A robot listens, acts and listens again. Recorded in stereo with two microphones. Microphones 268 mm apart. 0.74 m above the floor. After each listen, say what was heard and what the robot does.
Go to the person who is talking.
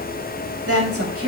The woman speaking: about 60° right or 120° right. Turn 60° right.
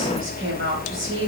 Keep listening.
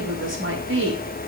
So it is at 55° right. Turn 55° right.
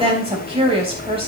The woman speaking is now 20° right. Turn 20° right.
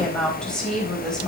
Drive 1.0 m forward.
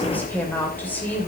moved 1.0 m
Keep listening.
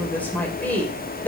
Drive 1.0 m forward.
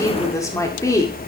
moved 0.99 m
The woman speaking is now 15° left. Turn 15° left.
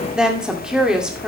Drive 1.0 m forward.
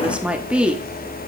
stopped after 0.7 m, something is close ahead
I am next to the woman speaking.